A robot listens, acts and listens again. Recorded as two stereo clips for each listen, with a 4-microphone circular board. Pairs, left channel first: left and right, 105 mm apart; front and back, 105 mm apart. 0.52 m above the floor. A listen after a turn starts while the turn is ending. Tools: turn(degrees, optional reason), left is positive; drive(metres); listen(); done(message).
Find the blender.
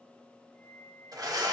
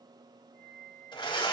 turn(degrees=-35, reason="The blender: 35° right.")
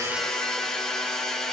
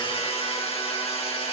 done("Found it: a blender, straight ahead.")